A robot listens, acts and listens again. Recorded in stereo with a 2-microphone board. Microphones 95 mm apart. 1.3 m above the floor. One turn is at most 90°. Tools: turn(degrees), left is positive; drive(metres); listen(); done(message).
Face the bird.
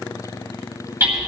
listen()
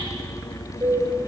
turn(degrees=-65)
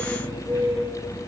turn(degrees=-50)
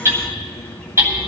listen()
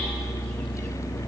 listen()
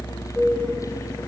turn(degrees=15)
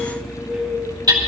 done("Found it: a bird, straight ahead.")